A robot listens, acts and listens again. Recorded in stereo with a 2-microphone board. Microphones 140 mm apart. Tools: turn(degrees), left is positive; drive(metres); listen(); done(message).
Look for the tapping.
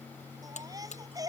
listen()
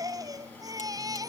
listen()
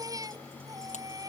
done("I can't make out tapping, only a baby crying and a buzzer.")